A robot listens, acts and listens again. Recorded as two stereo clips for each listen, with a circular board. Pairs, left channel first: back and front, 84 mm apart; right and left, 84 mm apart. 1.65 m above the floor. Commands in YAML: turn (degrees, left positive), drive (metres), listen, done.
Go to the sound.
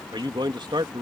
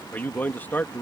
turn: -25
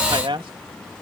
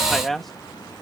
drive: 1.0
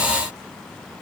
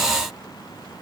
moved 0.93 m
listen: true
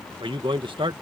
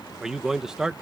drive: 1.0
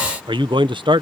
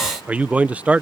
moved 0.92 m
turn: 15
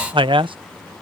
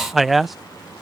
drive: 1.0
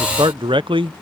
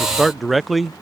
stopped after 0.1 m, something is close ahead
done: "Arrived at the man speaking, straight ahead."